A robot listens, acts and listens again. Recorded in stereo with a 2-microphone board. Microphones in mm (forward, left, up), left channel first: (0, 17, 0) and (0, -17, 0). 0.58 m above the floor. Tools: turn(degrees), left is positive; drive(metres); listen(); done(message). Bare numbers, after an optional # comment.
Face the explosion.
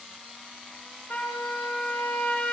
listen()
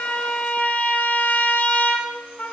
listen()
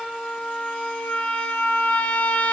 done("I can't make out an explosion to turn to.")